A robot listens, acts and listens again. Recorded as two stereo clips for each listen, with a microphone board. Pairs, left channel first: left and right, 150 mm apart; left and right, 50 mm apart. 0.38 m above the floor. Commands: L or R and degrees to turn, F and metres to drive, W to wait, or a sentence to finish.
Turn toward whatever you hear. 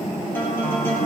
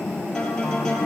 L30
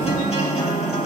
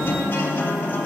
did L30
L135
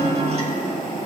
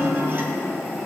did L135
R45
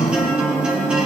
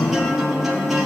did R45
Found it: a guitar, straight ahead, 2 to 4 m away.